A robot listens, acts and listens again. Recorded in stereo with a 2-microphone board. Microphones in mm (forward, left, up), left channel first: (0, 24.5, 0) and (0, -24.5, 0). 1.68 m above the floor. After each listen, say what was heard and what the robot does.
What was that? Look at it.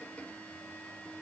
Keep listening.
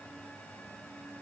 Keep listening.
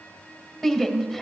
Turn 30° left.
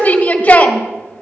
So it is at 150° left. Turn 150° left.
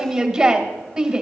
The shout is now 10° right. Turn 10° right.
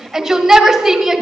Facing the shout.